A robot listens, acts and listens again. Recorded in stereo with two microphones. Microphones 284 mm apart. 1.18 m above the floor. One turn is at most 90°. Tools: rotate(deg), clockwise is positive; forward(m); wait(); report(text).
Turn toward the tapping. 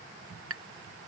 rotate(50)
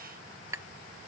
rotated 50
rotate(10)
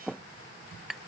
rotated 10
report("Facing the tapping.")